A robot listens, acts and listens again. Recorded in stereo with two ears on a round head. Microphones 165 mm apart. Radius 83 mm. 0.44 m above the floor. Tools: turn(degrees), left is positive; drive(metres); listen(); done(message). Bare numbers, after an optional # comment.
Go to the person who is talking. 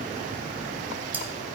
listen()
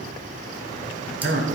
# The man speaking: about 65° right or 115° right.
turn(-65)
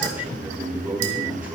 # So it is at 10° right.
turn(-10)
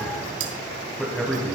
drive(1.0)
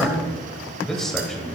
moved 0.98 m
drive(1.0)
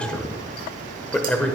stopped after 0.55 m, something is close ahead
# The man speaking is now 10° left.
turn(10)
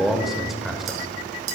done("I am next to the man speaking.")